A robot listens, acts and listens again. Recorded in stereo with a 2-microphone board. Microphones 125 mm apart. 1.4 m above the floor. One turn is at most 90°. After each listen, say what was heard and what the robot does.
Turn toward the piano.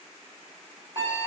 Keep listening.
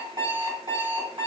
Keep listening.
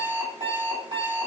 I can't make out a piano to turn to.